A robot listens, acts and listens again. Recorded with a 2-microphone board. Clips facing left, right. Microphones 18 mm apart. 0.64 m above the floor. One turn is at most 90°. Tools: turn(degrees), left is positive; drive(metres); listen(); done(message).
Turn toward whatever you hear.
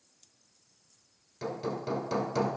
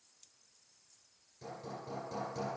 turn(degrees=60)
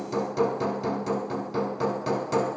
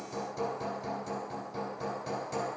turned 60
turn(degrees=40)
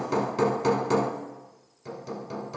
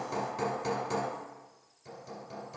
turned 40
turn(degrees=30)
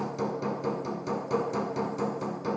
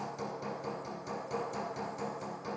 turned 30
turn(degrees=20)
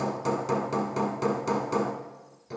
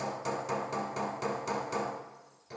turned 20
done("Found it: hammering, straight ahead, 1 to 2 m away.")